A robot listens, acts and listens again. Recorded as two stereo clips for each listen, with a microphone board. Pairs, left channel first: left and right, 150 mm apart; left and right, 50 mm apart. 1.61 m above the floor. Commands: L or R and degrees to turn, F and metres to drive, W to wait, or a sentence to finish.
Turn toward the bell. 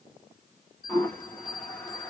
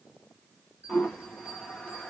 R35
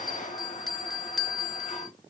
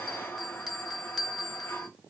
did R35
Facing the bell.